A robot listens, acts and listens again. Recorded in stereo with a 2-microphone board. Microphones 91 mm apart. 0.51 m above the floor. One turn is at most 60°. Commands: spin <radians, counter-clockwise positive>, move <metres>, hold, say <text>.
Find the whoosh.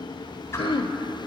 spin 0.52
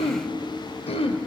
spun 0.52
hold
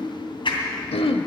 spin 1.05
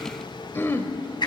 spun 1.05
spin 0.96
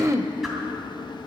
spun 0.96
hold
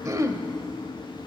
hold
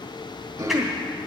say I heard a whoosh from this way, but can't make it out now.